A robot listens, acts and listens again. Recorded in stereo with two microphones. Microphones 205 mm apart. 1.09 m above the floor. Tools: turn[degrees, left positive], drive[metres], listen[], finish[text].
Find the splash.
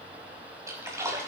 Action: turn[-30]
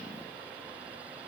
Action: listen[]
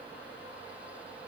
Action: finish[I heard a splash, but can't make it out now. It was about 15° left or 135° right.]